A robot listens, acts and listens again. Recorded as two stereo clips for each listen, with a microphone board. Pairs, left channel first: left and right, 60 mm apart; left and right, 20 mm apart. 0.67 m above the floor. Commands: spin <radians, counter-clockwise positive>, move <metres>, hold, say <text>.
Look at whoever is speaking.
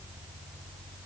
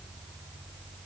hold
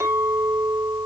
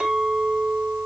hold
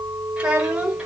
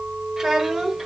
spin -0.52
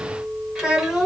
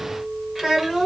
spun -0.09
spin -0.52
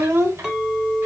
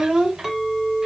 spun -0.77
spin -2.36
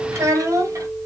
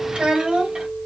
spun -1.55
spin -1.05
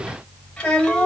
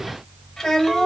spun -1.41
spin 0.35
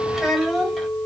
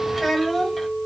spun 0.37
say Facing the child speaking, 2 to 4 m away.